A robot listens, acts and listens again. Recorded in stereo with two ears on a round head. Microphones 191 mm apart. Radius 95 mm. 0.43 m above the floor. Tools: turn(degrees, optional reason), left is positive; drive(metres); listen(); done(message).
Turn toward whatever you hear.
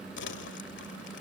turn(degrees=55, reason="The crumpling: about 55° left or 125° left.")
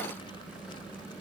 listen()
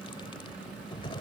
turn(degrees=30, reason="So it is at 30° left.")
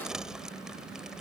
done("Found it: crumpling, straight ahead.")